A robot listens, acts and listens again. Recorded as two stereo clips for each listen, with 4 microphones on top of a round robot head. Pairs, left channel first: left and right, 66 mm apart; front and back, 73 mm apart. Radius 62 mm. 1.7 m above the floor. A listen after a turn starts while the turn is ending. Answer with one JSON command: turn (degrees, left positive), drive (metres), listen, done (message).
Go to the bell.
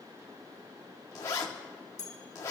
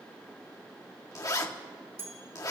{"turn": 130}
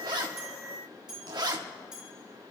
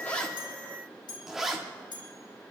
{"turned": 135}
{"drive": 1.0}
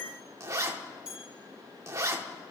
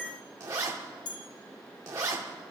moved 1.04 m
{"turn": -10}
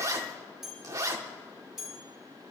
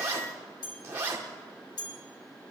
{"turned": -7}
{"drive": 1.0}
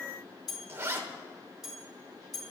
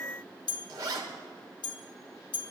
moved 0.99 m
{"drive": 1.0}
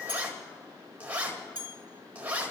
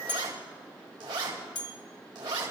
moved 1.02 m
{"turn": -15}
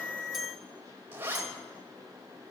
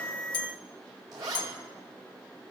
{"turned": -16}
{"drive": 1.0}
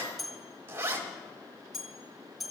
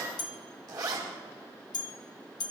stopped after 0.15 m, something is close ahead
{"done": "Arrived at the bell, straight ahead."}